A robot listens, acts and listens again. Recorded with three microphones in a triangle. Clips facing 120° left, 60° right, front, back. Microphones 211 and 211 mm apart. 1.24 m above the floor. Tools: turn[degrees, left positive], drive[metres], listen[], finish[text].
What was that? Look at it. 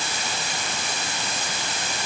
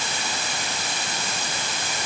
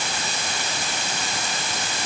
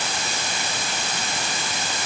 Action: listen[]
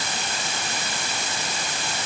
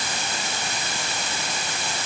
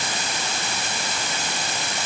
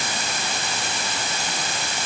Action: listen[]
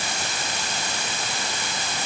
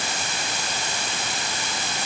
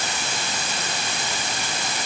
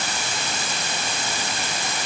Action: finish[I can't make out anything to turn to.]